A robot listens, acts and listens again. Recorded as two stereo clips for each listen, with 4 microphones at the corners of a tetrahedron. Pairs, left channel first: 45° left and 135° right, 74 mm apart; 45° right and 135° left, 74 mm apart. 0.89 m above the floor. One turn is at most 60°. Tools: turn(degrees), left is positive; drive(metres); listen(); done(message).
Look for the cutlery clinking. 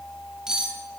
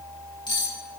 turn(degrees=-50)
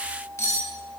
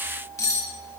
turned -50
done("Found it: cutlery clinking, straight ahead.")